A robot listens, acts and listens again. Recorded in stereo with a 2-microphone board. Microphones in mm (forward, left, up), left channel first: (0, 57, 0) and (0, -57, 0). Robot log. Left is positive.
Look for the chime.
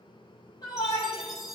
cmd yaw -30
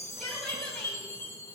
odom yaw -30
note: So it is at 25° left.
cmd yaw +25
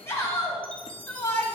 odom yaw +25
note: The chime is now 10° left.
cmd yaw +10
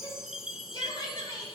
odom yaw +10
end: Facing the chime.